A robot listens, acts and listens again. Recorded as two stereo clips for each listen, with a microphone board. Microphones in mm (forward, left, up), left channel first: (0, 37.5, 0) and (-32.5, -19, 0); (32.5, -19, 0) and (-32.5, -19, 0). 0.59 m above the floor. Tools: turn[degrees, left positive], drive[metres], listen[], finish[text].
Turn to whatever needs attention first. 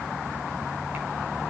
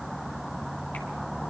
Action: listen[]
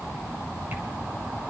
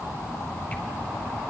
Action: listen[]
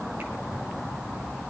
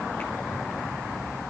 Action: finish[I can't make out anything urgent.]